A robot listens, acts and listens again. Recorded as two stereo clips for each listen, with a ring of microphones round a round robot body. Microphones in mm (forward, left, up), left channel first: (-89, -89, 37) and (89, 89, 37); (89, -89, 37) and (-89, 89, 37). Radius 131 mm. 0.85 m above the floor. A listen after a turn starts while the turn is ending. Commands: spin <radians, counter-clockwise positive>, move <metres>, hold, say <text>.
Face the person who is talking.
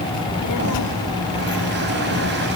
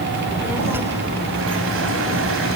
spin -2.53
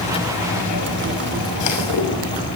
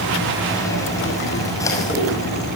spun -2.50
hold
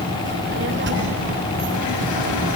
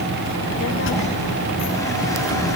say Found it: a child speaking, straight ahead, 2 to 4 m away.